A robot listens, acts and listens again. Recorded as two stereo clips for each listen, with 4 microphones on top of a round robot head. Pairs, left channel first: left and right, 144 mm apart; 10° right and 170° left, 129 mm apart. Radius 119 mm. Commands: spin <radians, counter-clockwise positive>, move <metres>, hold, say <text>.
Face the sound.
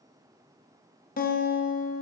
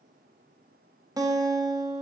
spin 1.92
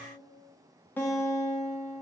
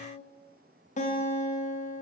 spin 0.17
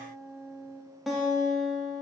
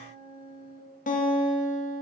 say Found it: a guitar, straight ahead.